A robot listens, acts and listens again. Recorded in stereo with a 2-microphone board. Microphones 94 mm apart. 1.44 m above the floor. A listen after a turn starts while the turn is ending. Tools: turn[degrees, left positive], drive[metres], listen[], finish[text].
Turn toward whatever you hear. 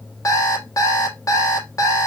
Thought: The alarm clock: about 40° left or 140° left.
Action: turn[40]
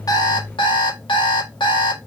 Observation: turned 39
Thought: So it is at 100° left.
Action: turn[100]
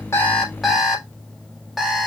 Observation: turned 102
Action: finish[Facing the alarm clock, 1 to 2 m away.]